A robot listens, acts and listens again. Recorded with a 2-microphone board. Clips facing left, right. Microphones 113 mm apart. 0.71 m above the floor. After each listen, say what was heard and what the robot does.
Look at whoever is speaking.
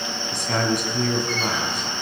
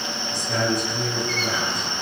Turn 90° left.
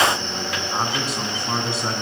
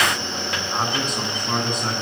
Facing the man speaking, over 4 m away.